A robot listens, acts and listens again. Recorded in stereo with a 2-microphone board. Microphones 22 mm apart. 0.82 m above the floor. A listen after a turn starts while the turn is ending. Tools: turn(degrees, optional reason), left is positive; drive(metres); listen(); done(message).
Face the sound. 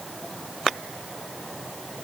listen()
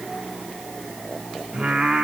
turn(degrees=-65, reason="The singing: about 65° right or 115° right.")
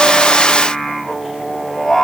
turn(degrees=-10, reason="So it is at 10° right.")
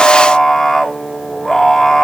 done("Facing the singing, 1 to 2 m away.")